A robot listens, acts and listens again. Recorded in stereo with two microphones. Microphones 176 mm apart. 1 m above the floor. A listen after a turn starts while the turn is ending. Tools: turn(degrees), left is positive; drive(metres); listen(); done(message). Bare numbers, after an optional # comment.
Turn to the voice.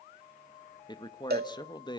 # The man speaking: about 25° left or 155° left.
turn(25)
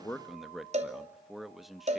done("Facing the man speaking.")